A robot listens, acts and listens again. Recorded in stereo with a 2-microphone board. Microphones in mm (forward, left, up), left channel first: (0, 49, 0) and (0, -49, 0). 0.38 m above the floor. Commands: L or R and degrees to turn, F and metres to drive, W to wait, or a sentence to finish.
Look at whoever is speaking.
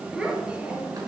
R30
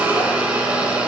W
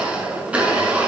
W
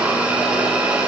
I heard a child speaking, but can't make it out now. It was about 20° left or 140° right.